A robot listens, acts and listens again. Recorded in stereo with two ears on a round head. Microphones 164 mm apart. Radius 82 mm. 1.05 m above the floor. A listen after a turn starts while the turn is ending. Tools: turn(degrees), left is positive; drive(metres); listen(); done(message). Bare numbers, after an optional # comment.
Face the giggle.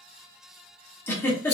turn(30)
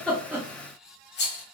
listen()
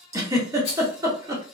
# So it is at 20° right.
turn(-20)
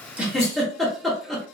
done("Facing the giggle, under 1 m away.")